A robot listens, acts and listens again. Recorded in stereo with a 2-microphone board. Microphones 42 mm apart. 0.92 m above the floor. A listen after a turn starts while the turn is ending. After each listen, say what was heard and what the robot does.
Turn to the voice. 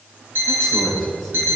Turn 30° left.
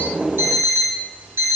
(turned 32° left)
Keep listening.
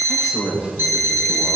So it is at 25° right. Turn 25° right.
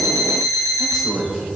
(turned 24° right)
Found it: a man speaking, straight ahead, over 4 m away.